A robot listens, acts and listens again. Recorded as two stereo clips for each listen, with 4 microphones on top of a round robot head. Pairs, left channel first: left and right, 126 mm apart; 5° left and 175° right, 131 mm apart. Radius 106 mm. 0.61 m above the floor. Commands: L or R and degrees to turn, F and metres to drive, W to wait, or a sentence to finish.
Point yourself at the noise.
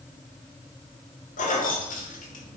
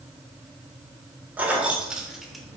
L100
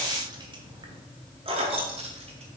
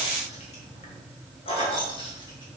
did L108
R55
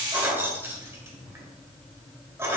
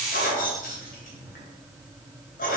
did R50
R20
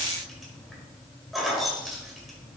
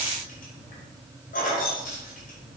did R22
Facing the keys jangling.